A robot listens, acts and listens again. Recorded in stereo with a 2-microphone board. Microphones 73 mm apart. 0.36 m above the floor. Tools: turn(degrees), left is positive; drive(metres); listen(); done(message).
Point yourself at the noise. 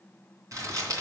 turn(degrees=-45)
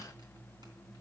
listen()
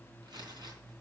turn(degrees=-85)
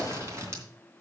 turn(degrees=-40)
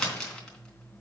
turn(degrees=10)
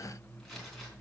listen()
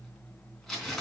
done("Found it: crumpling, straight ahead.")